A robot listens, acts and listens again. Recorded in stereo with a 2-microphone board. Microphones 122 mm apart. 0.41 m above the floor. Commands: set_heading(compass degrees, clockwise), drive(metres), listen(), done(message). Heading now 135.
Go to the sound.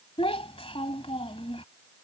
set_heading(85)
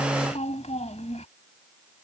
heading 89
set_heading(14)
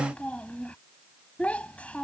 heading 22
set_heading(12)
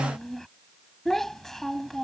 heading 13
drive(1.0)
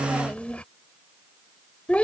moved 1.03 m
set_heading(358)
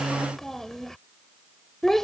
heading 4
drive(1.0)
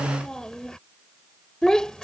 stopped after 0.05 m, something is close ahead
done("Arrived at the child speaking, straight ahead.")